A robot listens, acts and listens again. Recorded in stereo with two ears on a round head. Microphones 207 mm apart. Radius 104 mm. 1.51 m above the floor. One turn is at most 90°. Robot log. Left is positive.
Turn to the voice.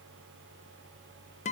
cmd idle
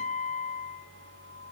cmd idle
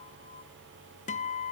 end: I can't make out anyone speaking to turn to.